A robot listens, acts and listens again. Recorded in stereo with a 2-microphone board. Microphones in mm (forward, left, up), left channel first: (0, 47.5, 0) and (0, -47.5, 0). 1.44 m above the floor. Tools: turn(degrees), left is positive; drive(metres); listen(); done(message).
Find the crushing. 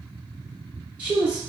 listen()
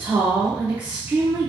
listen()
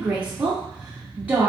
done("I can't make out crushing to turn to.")